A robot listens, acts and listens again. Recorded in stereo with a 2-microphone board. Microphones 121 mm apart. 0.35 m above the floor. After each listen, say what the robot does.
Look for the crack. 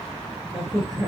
Turn 30° right.
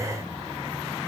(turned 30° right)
Keep listening.
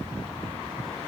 I heard a crack, but can't make it out now. It was about straight ahead or 120° right.